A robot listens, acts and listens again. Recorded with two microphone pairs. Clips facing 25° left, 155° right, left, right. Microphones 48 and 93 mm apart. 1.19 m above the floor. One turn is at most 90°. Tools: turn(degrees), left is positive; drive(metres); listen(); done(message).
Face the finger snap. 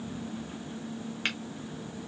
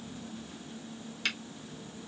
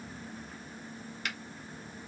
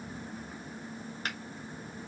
turn(degrees=-35)
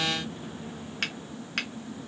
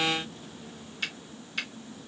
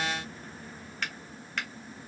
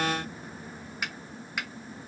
turn(degrees=-10)
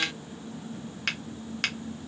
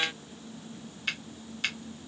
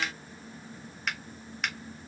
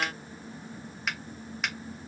done("Facing the finger snap, 1 to 2 m away.")